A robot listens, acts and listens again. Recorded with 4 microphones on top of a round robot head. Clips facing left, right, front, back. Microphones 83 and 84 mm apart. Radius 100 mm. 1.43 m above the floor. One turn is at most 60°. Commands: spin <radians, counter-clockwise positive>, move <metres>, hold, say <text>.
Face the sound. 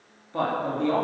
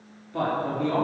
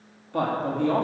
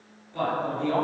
spin 0.44
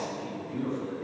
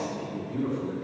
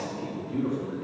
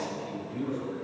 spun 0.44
say Facing the man speaking, 2 to 4 m away.